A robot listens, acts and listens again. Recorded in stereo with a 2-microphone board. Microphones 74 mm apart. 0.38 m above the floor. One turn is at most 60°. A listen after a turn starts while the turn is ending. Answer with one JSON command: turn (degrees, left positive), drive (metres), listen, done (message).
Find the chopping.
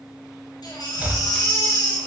{"turn": -25}
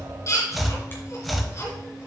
{"done": "Found it: chopping, straight ahead."}